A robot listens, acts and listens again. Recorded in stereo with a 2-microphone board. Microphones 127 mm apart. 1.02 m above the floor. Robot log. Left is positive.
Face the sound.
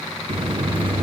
note: The buzzer: about 40° right or 140° right.
cmd yaw -40
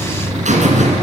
note: So it is at 95° right.
cmd yaw -95
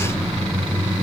note: The buzzer is now 10° right.
cmd yaw -10
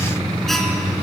end: Found it: a buzzer, straight ahead.